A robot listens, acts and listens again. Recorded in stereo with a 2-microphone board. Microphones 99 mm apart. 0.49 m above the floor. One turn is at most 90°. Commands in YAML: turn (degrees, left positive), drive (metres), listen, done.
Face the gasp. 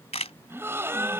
turn: -25
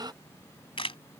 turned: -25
turn: -90
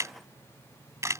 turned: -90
turn: -40
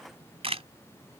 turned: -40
done: "Facing where the gasp came from. I can't hear it now."